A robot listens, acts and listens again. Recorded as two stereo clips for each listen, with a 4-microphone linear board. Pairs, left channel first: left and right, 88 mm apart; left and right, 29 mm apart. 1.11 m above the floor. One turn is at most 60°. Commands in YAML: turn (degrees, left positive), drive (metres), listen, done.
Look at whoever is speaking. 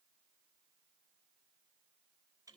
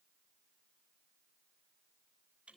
listen: true
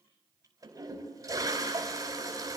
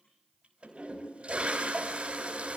listen: true
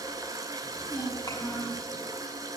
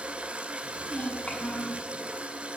turn: 50
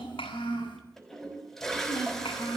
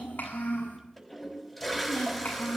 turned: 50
turn: 60
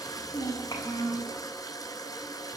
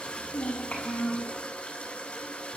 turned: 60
turn: 45
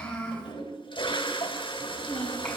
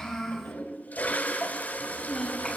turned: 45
turn: 15
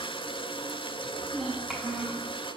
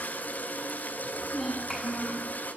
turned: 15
done: "Found it: a child speaking, straight ahead, over 4 m away."